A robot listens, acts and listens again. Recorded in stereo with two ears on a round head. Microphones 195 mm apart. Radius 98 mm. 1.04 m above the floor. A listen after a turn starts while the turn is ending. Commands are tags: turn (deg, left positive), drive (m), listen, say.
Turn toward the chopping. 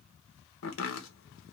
<turn deg="65"/>
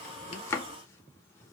<turn deg="15"/>
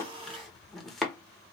<say>Facing the chopping.</say>